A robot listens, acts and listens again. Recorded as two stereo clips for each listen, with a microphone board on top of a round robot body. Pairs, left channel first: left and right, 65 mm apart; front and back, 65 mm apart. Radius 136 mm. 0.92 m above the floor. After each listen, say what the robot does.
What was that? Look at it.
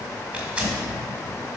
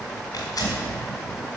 Turn 20° right.
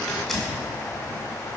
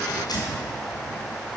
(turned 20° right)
Facing the tearing paper.